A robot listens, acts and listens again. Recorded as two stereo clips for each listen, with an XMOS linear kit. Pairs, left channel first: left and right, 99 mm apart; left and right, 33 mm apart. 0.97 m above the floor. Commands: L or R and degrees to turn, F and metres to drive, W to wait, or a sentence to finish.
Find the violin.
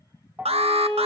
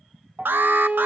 R45
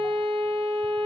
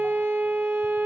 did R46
R90
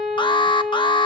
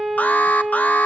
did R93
Found it: a violin, straight ahead, over 4 m away.